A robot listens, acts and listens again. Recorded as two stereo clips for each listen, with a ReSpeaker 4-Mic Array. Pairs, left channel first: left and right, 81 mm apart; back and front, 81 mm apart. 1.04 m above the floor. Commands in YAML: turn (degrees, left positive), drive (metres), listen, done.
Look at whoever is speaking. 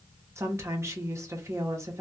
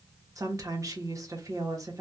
turn: -40
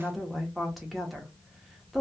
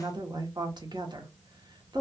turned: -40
done: "Facing the woman speaking."